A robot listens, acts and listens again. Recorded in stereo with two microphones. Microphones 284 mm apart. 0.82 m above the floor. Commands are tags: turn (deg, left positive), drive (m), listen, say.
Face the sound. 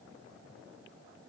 <listen/>
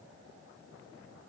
<listen/>
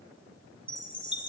<turn deg="15"/>
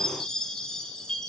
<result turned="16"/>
<say>Facing the chime, under 1 m away.</say>